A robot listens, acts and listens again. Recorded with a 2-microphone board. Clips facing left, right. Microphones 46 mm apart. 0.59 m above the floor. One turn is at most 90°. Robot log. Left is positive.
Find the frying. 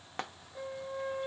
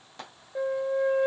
note: The frying: about 45° left or 135° left.
cmd yaw +45
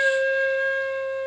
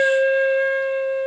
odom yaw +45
cmd idle
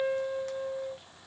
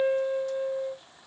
cmd idle
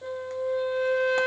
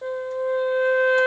end: I heard frying, but can't make it out now. It was about straight ahead or 90° left.